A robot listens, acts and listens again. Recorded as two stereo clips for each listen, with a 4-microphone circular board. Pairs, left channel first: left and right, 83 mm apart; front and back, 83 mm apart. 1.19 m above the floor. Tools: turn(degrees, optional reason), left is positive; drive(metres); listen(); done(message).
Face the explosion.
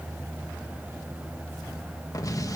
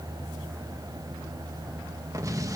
turn(degrees=135, reason="The explosion: 135° left.")
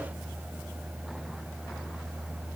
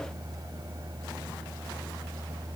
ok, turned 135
done("I heard an explosion from this way, but can't make it out now.")